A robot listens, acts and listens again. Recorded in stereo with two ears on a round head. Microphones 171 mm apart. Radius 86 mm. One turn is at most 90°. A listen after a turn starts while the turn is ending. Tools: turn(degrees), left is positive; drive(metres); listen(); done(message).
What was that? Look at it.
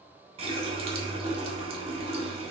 turn(degrees=-30)
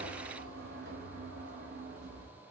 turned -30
turn(degrees=-90)
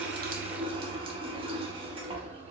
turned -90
turn(degrees=-30)
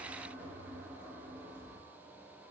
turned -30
turn(degrees=-10)
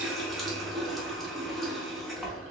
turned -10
done("Found it: a running tap, straight ahead, under 1 m away.")